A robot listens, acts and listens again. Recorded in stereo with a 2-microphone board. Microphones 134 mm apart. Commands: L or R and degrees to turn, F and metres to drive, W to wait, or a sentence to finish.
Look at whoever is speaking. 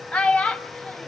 L30
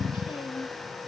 W
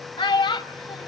L145
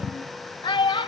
L35
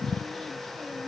W
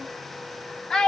Found it: a child speaking, straight ahead, 1 to 2 m away.